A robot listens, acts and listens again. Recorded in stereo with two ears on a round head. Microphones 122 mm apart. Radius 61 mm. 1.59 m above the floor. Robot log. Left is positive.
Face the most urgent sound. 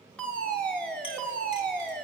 cmd yaw +30
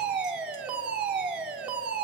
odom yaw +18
note: So it is at 10° right.
cmd yaw -10
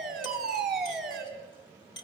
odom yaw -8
end: Found it: a fire alarm, straight ahead, over 4 m away.